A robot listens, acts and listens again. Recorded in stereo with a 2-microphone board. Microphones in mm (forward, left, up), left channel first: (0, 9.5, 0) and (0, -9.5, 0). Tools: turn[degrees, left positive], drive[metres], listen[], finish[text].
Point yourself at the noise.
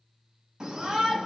Thought: The shout: about 40° right or 140° right.
Action: turn[-40]
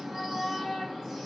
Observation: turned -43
Action: finish[Found it: a shout, straight ahead, 2 to 4 m away.]